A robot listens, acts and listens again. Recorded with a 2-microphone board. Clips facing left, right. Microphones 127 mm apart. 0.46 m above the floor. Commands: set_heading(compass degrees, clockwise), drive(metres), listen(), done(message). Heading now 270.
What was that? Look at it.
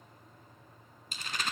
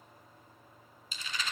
set_heading(210)
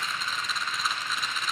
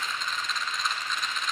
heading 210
done("Facing the rattle, 1 to 2 m away.")